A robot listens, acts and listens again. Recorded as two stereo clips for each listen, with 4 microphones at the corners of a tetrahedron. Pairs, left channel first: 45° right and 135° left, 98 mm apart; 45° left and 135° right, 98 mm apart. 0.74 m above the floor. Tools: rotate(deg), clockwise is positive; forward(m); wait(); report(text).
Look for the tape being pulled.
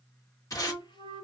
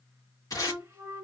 report("Facing the tape being pulled.")